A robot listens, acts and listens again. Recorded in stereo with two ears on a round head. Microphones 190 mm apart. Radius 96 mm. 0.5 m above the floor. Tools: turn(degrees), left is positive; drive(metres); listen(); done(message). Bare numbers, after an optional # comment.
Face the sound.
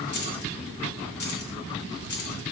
# The keys jangling: about 55° left or 125° left.
turn(55)
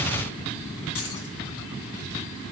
# So it is at 70° left.
turn(70)
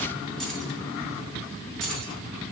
done("Found it: keys jangling, straight ahead.")